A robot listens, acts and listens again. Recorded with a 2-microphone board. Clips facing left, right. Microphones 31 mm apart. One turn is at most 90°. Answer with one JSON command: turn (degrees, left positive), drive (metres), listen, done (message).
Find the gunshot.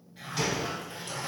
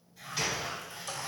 {"turn": -30}
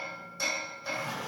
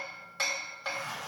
{"listen": true}
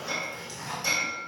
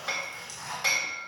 {"done": "I heard a gunshot, but can't make it out now. It was about 25° left or 145° right."}